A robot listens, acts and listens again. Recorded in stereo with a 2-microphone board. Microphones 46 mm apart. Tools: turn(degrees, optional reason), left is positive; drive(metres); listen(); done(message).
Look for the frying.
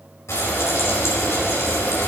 turn(degrees=75, reason="The frying: about 75° left or 105° left.")
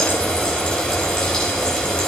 turn(degrees=20, reason="So it is at 20° left.")
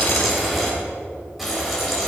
done("Facing the frying.")